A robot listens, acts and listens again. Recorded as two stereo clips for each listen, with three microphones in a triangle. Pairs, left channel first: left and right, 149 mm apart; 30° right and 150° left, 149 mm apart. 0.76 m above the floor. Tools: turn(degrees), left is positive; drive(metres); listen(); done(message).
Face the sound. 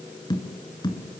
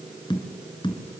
turn(degrees=30)
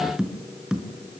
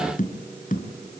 done("Facing the tapping, 2 to 4 m away.")